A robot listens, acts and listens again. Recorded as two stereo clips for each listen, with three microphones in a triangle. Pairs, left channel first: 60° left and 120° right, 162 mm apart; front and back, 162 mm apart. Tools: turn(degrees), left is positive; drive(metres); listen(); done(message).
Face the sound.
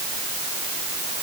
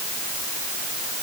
listen()
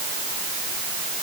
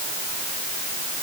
listen()
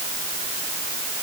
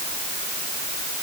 done("I can't make out anything to turn to.")